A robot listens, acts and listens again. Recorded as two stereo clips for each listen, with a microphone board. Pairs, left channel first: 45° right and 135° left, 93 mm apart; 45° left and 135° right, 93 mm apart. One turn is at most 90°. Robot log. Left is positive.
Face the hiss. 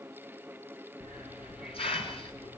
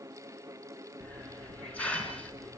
note: The hiss: 30° right.
cmd yaw -30
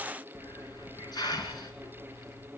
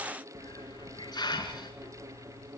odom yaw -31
end: Facing the hiss, over 4 m away.